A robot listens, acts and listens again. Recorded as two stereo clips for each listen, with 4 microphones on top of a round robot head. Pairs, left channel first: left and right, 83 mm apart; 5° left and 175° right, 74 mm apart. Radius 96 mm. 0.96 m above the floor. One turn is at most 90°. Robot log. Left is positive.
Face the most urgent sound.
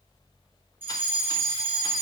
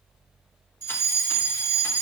note: The fire alarm: 150° right.
cmd yaw -90
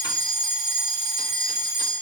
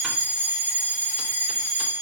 note: The fire alarm is now 110° right.
cmd yaw -90
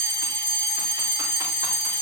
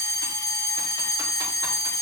end: Facing the fire alarm, over 4 m away.